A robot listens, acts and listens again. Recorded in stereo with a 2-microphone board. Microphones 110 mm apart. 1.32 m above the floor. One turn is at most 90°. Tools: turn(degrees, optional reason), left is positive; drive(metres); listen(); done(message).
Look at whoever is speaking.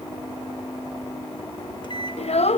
turn(degrees=70, reason="The child speaking: about 70° left or 110° left.")
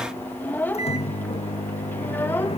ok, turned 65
turn(degrees=20, reason="So it is at 20° left.")
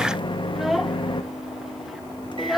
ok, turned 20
done("Found it: a child speaking, straight ahead, under 1 m away.")